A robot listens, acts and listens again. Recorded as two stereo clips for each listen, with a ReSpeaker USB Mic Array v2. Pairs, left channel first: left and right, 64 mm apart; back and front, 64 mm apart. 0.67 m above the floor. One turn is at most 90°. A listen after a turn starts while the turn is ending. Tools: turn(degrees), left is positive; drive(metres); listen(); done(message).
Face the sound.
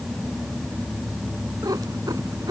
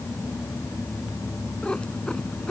turn(degrees=-90)
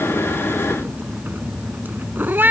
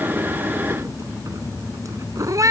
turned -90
turn(degrees=-30)
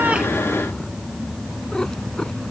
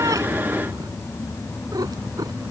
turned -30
turn(degrees=10)
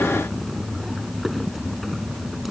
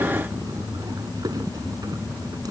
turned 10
done("Facing the cat meowing.")